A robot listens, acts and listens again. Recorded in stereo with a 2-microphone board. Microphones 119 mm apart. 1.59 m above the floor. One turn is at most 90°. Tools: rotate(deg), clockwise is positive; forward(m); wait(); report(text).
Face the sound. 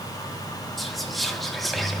rotate(-30)
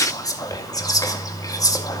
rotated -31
rotate(-90)
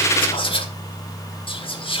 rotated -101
rotate(-50)
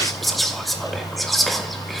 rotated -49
report("Facing the whispering.")